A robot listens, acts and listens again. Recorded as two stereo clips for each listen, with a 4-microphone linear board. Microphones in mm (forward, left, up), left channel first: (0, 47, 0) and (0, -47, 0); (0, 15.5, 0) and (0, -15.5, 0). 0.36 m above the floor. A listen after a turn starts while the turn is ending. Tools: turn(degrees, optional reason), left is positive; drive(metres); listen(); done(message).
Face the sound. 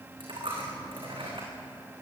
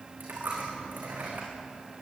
turn(degrees=-65, reason="The dropped coin: about 65° right or 115° right.")
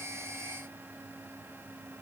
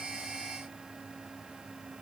listen()
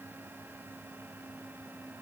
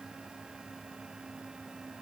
done("I heard a dropped coin, but can't make it out now. It was about straight ahead or 50° right.")